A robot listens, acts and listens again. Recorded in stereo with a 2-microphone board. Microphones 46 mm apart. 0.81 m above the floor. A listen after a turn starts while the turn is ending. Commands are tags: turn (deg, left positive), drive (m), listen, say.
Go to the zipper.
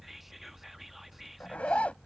<turn deg="25"/>
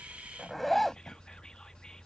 <drive m="1.0"/>
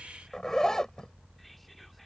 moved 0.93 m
<turn deg="10"/>
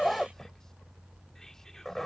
<drive m="1.0"/>
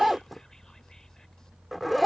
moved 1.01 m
<drive m="1.0"/>
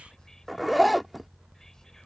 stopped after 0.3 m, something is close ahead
<say>I am next to the zipper.</say>